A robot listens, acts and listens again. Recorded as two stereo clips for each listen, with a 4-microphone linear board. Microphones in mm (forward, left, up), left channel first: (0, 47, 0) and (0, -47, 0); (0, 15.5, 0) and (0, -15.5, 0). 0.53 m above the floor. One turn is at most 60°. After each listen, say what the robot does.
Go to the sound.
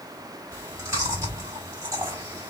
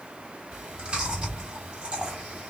Turn 35° right.
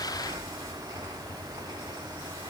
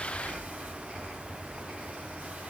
Turn 60° right.
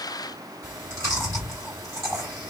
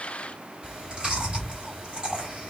Turn 40° right.
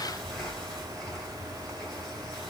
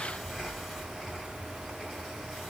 Drive 1.0 m forward.
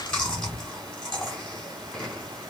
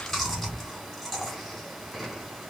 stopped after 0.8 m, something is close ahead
Turn 10° left.
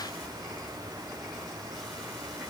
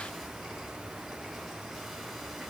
Arrived at the chewing, straight ahead.